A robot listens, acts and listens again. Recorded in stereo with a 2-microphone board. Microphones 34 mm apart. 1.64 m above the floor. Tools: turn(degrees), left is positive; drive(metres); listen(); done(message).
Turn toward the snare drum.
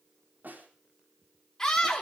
turn(degrees=-60)
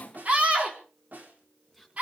turn(degrees=-60)
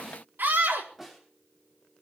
done("Facing the snare drum.")